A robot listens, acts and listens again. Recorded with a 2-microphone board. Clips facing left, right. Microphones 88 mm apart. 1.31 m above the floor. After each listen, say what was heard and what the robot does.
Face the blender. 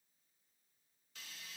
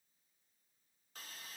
Keep listening.
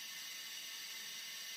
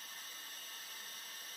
Keep listening.
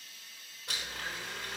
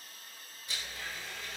The blender: about 70° left or 110° left. Turn 70° left.
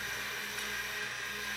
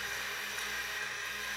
Found it: a blender, straight ahead.